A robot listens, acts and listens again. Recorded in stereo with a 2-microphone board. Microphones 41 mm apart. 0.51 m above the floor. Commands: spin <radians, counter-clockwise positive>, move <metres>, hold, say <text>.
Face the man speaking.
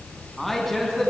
spin 0.52
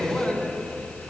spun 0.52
spin 2.44
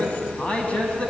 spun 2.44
spin 0.52
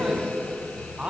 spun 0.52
spin -0.26
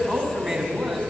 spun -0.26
say Facing the man speaking, over 4 m away.